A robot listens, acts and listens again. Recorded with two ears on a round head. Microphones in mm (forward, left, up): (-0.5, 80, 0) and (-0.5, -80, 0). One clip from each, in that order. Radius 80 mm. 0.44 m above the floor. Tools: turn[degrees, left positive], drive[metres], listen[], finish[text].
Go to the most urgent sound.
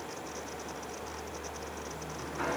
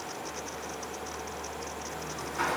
Action: listen[]
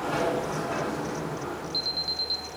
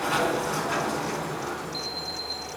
Thought: The alarm: about 40° left or 140° left.
Action: turn[40]
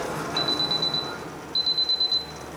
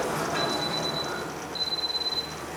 Thought: So it is at 90° left.
Action: turn[90]
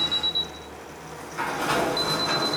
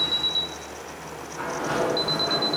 Action: drive[1.0]
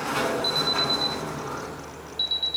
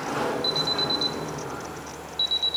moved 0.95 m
Action: drive[1.0]
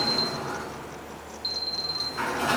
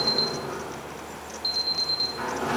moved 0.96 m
Action: drive[1.0]
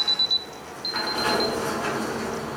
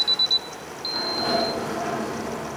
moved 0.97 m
Action: drive[1.0]
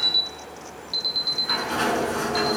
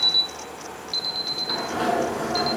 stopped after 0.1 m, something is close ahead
Action: finish[I am next to the alarm.]